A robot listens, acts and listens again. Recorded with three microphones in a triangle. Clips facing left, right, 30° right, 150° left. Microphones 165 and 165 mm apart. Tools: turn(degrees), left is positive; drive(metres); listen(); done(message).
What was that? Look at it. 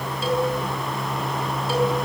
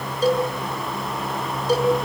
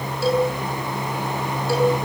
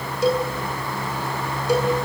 turn(degrees=-140)
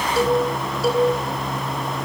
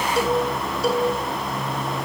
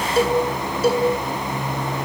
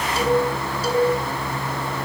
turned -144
done("Found it: a cowbell, straight ahead, over 4 m away.")